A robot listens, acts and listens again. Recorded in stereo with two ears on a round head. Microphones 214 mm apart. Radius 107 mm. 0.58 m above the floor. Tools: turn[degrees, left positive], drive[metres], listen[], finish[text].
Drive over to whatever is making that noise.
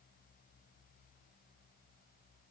Action: listen[]
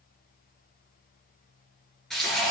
Action: turn[30]
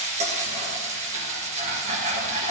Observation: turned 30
Thought: So it is at 30° right.
Action: turn[-30]
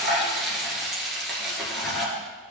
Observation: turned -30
Action: drive[1.0]
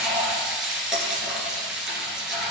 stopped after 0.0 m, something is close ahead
Action: finish[Blocked. The frying is further on, straight ahead.]